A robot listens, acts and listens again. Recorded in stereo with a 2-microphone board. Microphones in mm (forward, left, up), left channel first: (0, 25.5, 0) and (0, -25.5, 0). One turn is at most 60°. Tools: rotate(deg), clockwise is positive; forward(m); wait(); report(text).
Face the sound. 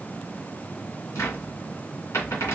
rotate(-60)
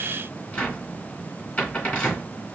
rotate(-30)
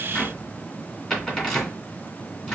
rotate(-15)
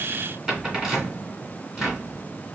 report("Facing the cupboard door, 2 to 4 m away.")